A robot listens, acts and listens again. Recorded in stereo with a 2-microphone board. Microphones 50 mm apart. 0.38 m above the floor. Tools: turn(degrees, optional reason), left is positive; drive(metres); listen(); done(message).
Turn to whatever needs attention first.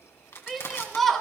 turn(degrees=30)
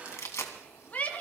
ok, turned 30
turn(degrees=145, reason="So it is at 145° left.")
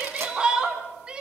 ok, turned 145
turn(degrees=-20, reason="The shout is now 20° right.")
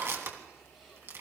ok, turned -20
listen()
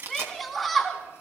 done("Facing the shout, 2 to 4 m away.")